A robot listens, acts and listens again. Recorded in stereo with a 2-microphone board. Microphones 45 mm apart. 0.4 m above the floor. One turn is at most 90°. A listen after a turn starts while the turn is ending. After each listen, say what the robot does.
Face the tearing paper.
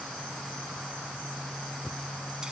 Keep listening.
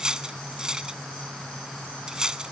Keep listening.
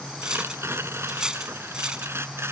Turn 60° right.
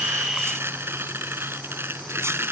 Turn 55° right.
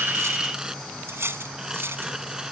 Turn 10° right.
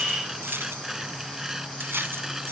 Turn 10° right.
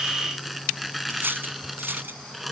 Facing the tearing paper.